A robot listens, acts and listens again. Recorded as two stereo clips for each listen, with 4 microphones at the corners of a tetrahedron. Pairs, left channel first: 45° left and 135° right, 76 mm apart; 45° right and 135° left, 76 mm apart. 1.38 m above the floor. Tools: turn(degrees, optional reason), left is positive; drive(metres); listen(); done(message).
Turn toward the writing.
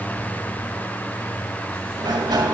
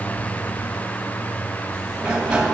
listen()
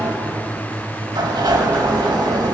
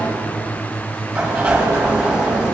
listen()
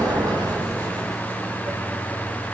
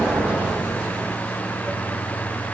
done("I can't make out writing, only a sliding door.")